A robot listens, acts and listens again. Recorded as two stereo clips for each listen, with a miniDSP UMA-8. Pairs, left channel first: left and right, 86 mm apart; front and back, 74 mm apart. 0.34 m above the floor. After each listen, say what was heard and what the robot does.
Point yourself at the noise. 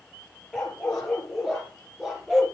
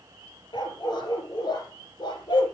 Found it: a dog barking, straight ahead, 2 to 4 m away.